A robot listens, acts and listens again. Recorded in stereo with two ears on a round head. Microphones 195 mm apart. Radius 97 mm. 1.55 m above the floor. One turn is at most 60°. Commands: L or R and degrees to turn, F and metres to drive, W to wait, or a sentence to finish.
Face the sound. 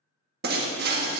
R50
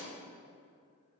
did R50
W
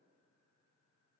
I heard breaking glass, but can't make it out now. It was about straight ahead or 80° right.